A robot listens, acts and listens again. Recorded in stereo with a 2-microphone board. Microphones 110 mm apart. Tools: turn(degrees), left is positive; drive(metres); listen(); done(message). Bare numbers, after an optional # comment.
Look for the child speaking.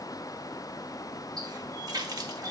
listen()
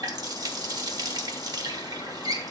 listen()
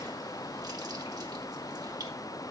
done("I can't make out a child speaking, only a running tap.")